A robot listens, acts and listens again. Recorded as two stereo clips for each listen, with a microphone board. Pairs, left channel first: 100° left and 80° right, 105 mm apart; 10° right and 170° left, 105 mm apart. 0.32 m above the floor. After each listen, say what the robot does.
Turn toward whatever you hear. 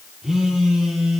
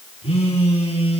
Found it: a phone buzzing, straight ahead, over 4 m away.